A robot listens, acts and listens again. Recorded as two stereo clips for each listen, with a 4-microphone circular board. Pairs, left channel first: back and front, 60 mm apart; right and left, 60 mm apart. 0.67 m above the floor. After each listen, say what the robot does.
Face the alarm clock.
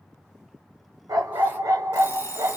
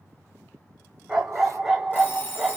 Turn 145° right.
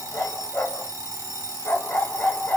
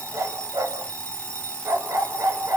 Turn 25° right.
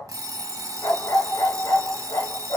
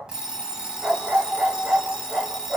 Turn 15° left.
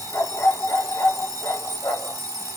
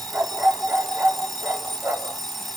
Facing the alarm clock, 1 to 2 m away.